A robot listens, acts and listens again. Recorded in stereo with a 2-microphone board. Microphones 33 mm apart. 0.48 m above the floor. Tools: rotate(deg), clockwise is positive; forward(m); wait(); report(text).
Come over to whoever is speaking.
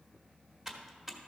wait()
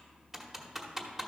wait()
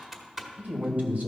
rotate(60)
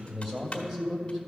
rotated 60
rotate(25)
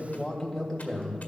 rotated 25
forward(1.0)
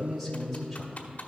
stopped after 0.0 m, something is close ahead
report("Blocked. The man speaking is further on, straight ahead.")